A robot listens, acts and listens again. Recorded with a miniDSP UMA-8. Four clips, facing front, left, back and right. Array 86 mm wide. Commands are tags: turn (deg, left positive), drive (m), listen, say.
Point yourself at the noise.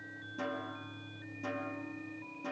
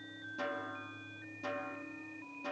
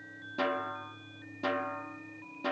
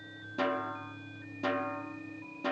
<turn deg="-140"/>
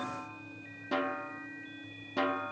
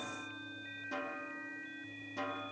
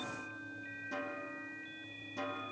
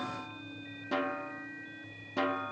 <turn deg="-35"/>
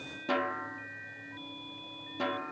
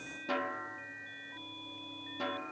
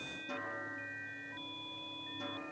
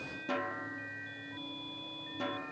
<turn deg="10"/>
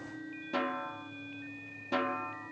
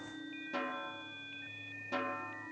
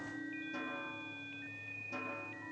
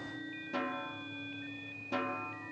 <say>Facing the snare drum.</say>